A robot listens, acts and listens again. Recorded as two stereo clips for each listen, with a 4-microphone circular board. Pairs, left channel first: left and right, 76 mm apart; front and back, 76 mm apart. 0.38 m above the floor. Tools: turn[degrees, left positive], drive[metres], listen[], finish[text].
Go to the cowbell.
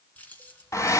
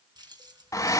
Action: listen[]
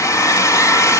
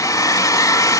Action: listen[]
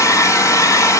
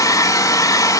Action: finish[I can't make out a cowbell to turn to.]